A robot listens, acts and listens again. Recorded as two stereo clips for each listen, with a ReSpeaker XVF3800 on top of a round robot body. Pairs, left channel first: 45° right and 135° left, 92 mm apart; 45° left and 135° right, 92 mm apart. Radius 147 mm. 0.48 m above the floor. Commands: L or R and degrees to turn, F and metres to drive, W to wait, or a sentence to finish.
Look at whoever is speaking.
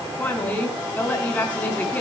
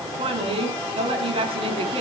R115
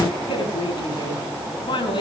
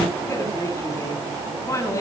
R15
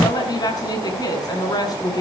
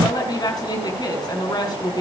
Facing the woman speaking, over 4 m away.